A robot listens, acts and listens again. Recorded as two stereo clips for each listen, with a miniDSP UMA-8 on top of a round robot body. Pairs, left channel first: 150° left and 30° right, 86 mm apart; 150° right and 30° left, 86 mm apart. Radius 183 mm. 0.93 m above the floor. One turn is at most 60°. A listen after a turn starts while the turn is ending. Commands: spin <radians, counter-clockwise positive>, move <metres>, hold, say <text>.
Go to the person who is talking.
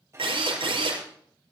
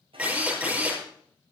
hold
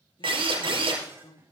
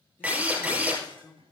spin 1.05
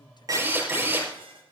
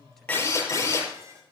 spin 1.05
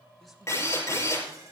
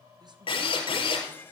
spin 0.44
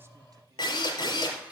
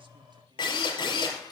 say Facing where the man speaking came from. I can't hear it now. I did not reach it.